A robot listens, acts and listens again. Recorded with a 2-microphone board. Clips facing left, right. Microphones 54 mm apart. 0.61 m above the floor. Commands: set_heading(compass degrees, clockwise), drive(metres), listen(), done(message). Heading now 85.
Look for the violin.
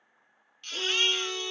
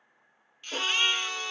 set_heading(140)
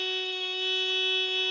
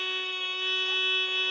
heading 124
set_heading(144)
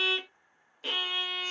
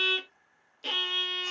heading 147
done("Facing the violin.")